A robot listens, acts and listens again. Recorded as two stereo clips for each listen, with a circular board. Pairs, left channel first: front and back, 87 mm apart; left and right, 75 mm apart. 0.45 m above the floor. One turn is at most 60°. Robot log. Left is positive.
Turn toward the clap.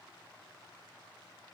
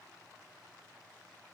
cmd idle
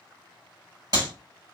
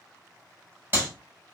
note: The clap: 145° right.
cmd yaw -60
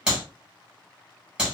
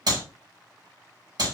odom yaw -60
note: The clap is now 100° right.
cmd yaw -60
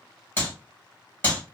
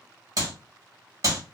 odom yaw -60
note: The clap is now 60° right.
cmd yaw -60
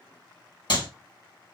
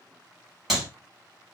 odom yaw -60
end: Found it: a clap, straight ahead, 1 to 2 m away.